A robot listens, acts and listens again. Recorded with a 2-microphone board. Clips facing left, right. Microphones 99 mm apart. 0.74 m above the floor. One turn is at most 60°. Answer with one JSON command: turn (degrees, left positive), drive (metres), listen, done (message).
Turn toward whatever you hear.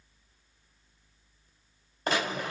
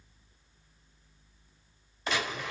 {"turn": 45}
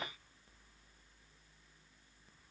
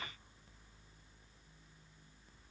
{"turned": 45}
{"listen": true}
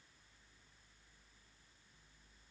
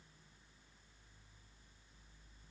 {"done": "I heard a gunshot, but can't make it out now. It was about straight ahead or 90° left."}